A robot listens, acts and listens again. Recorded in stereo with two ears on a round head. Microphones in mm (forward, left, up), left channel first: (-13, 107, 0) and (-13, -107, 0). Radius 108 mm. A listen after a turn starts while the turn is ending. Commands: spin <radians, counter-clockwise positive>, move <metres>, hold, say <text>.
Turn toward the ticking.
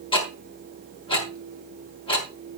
spin 0.44
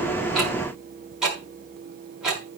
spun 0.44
say Facing the ticking, over 4 m away.